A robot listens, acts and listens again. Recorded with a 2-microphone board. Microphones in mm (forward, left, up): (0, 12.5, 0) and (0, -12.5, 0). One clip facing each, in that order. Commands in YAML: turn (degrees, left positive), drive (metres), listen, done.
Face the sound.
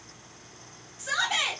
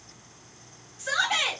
turn: -30
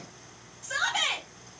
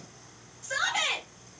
done: "Found it: a shout, straight ahead, 1 to 2 m away."